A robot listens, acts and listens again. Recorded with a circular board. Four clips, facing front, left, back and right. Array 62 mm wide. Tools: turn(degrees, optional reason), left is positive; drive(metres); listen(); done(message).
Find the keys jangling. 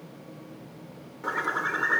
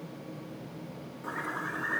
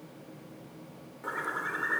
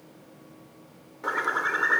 listen()
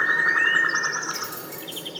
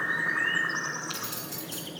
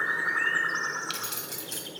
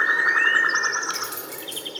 turn(degrees=-160, reason="The keys jangling: 160° right.")
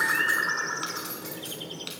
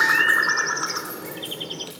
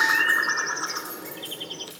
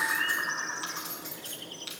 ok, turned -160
done("Facing the keys jangling.")